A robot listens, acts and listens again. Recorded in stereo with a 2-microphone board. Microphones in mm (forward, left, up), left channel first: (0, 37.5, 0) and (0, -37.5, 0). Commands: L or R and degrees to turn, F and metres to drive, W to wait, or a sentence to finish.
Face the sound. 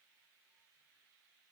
W
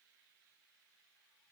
W
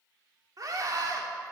R50
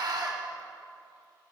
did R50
R75
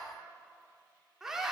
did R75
R10
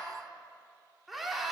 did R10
Found it: a scream, straight ahead.